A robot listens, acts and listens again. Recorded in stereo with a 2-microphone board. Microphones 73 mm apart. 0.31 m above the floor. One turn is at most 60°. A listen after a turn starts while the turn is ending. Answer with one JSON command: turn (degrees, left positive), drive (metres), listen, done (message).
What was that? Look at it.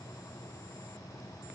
{"listen": true}
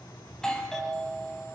{"turn": 30}
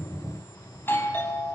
{"turn": 60}
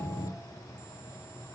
{"turn": 60}
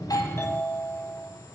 {"turn": 40}
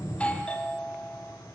{"turn": 20}
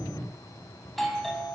{"done": "Found it: a doorbell, straight ahead, 2 to 4 m away."}